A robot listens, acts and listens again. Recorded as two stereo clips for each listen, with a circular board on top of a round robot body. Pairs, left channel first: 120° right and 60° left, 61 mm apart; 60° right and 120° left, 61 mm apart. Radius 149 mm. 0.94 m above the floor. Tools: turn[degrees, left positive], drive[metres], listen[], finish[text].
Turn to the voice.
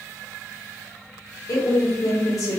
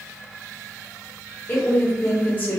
Thought: The woman speaking: 120° right.
Action: turn[-120]
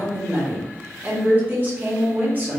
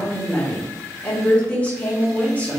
Action: finish[Facing the woman speaking, 1 to 2 m away.]